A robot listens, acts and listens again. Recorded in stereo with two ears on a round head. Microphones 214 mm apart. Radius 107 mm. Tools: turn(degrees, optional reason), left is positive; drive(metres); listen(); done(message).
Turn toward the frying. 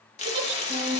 turn(degrees=25, reason="The frying: about 25° left or 155° left.")
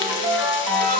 listen()
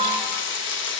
turn(degrees=120, reason="So it is at 120° left.")
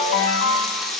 done("Facing the frying.")